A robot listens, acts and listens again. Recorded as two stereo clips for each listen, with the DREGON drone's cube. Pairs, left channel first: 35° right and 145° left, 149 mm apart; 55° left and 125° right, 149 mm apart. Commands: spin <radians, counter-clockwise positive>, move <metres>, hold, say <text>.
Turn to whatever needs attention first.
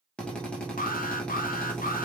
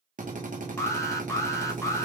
spin -0.26
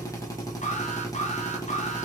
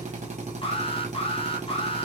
say Found it: an alarm, straight ahead, under 1 m away.